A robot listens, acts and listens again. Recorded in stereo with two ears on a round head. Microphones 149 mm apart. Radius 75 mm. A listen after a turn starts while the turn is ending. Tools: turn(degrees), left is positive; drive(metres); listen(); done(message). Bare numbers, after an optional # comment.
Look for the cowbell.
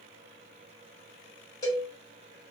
# The cowbell: about 25° left or 155° left.
turn(25)
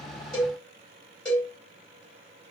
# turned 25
done("Found it: a cowbell, straight ahead.")